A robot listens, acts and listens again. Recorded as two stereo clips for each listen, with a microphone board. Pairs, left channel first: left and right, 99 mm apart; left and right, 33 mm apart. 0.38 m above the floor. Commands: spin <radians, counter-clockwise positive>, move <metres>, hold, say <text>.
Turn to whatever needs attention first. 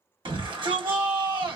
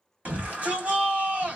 spin -0.96
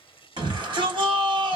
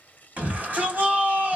spin -1.05
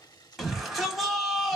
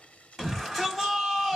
say Facing the shout.